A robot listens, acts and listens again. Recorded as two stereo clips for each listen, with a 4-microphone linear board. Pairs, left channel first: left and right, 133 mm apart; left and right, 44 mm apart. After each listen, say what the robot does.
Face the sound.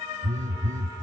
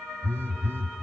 Turn 90° right.
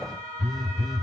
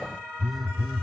Found it: a phone buzzing, straight ahead, 1 to 2 m away.